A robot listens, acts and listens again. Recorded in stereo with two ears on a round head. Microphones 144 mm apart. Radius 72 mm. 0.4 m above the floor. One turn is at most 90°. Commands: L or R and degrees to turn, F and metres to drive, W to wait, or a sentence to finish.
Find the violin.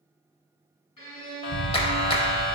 L35
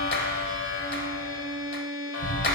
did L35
Found it: a violin, straight ahead.